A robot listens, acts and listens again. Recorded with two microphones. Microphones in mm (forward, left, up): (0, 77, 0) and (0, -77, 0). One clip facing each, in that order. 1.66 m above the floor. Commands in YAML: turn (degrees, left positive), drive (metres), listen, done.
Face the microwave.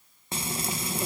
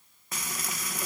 listen: true
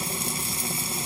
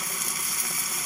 listen: true
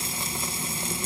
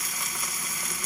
done: "I can't make out a microwave, only frying."